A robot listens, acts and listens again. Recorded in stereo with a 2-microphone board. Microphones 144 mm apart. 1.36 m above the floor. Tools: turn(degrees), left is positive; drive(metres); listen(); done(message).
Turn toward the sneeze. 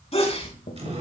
turn(degrees=45)
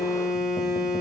listen()
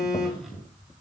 done("I heard a sneeze, but can't make it out now. It was about straight ahead or 90° left.")